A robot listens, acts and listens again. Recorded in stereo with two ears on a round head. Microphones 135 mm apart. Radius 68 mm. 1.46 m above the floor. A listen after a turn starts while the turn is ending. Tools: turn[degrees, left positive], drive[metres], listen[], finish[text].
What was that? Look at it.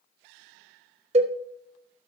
Thought: The cowbell: about 40° right or 140° right.
Action: turn[-40]
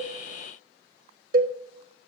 Thought: So it is at 90° right.
Action: turn[-90]
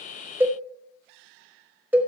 Thought: The cowbell is now 10° right.
Action: turn[-10]
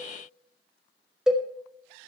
Action: finish[Found it: a cowbell, straight ahead, 1 to 2 m away.]